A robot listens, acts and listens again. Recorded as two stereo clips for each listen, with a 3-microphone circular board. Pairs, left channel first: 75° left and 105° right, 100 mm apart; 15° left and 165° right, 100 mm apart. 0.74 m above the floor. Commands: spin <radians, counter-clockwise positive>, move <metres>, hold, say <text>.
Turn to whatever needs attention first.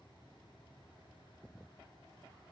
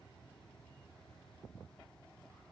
hold
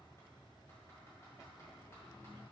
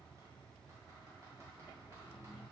hold
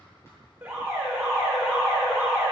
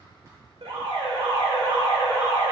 spin -2.97
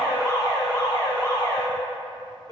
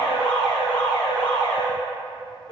spin 0.44
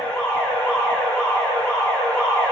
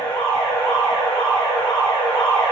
say Found it: an alarm, straight ahead, 1 to 2 m away.